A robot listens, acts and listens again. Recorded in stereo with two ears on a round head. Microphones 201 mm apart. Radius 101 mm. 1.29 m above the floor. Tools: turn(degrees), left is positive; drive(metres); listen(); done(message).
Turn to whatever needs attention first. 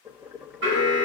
turn(degrees=-55)
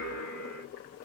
turn(degrees=-70)
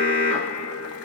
turn(degrees=10)
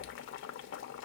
listen()
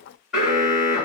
done("Found it: an alarm, straight ahead.")